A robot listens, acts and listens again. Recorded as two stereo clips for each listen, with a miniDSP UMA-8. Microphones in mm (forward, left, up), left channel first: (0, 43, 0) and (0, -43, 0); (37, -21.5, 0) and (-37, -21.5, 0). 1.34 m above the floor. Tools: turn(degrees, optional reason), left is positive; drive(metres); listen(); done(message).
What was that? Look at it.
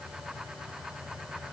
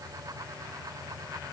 listen()
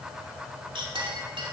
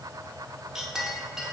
turn(degrees=-95, reason="The clink: 95° right.")
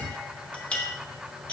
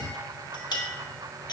turn(degrees=10, reason="The clink is now 10° left.")
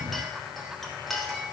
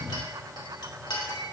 done("Found it: a clink, straight ahead, 2 to 4 m away.")